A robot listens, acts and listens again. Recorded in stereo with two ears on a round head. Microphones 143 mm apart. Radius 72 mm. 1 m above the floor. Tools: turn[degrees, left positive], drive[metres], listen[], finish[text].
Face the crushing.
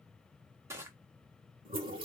Thought: The crushing: about 20° right or 160° right.
Action: turn[-20]
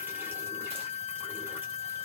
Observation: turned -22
Action: listen[]
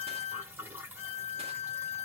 Action: listen[]
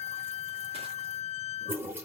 Action: finish[I heard crushing, but can't make it out now. It was about 5° left or 140° right.]